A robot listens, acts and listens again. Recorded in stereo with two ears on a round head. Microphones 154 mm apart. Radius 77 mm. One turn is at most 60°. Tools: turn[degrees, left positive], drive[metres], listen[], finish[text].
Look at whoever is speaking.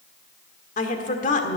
Thought: The woman speaking: about 50° left or 130° left.
Action: turn[50]
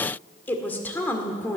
Thought: So it is at 15° left.
Action: turn[15]
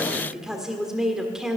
Action: finish[Found it: a woman speaking, straight ahead.]